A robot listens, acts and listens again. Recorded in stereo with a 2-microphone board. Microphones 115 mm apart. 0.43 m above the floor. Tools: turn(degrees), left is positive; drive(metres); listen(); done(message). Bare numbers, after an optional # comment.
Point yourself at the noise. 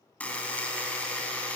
turn(30)
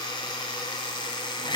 # So it is at 135° left.
turn(135)
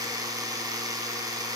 # The buzzer is now 35° right.
turn(-35)
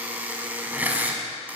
# The buzzer is now 15° right.
turn(-15)
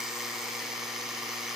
done("Facing the buzzer, 1 to 2 m away.")